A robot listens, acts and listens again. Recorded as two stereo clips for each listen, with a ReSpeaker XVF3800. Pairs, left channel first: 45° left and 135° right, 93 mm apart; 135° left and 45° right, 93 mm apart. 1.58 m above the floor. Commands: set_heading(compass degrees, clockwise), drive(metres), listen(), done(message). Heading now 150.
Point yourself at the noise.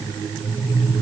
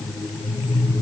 listen()
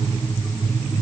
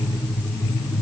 listen()
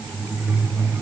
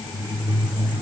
done("I can't make out anything.")